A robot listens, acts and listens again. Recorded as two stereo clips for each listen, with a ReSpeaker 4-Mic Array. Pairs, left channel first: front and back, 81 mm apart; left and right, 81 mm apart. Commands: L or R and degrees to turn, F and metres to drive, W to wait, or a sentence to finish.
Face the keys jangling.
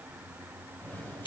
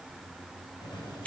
L65
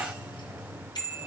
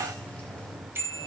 L15
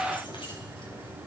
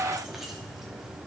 Found it: keys jangling, straight ahead.